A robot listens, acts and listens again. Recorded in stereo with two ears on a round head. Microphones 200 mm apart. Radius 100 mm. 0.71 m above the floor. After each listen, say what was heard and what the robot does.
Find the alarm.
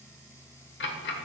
Keep listening.
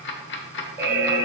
Turn 30° right.
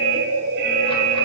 So it is at 135° right. Turn 135° right.
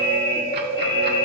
The alarm is now 25° left. Turn 25° left.
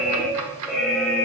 Found it: an alarm, straight ahead, 1 to 2 m away.